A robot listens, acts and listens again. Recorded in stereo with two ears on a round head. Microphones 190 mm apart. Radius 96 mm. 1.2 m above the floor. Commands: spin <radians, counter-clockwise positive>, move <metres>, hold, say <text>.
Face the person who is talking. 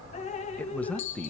spin 0.52
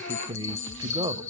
spin -0.35
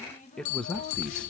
say Facing the man speaking, under 1 m away.